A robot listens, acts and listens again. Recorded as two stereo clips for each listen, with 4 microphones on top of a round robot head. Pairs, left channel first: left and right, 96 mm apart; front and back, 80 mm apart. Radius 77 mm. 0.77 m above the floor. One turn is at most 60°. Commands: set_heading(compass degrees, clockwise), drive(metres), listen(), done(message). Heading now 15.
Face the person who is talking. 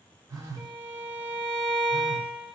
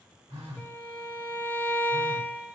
listen()
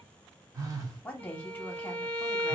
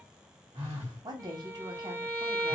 set_heading(315)
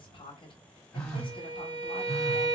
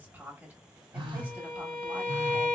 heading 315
set_heading(255)
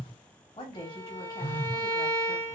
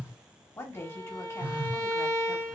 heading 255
set_heading(205)
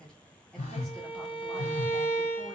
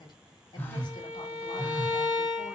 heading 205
done("Facing the woman speaking, 1 to 2 m away.")